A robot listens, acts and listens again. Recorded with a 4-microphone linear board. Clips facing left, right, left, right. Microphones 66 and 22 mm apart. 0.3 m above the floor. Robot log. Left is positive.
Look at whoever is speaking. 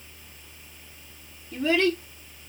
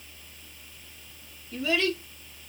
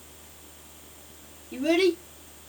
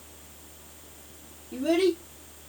note: The child speaking: about 35° left or 145° left.
cmd yaw +35
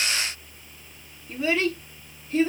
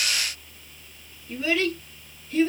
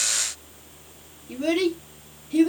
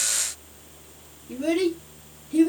end: Facing the child speaking, 2 to 4 m away.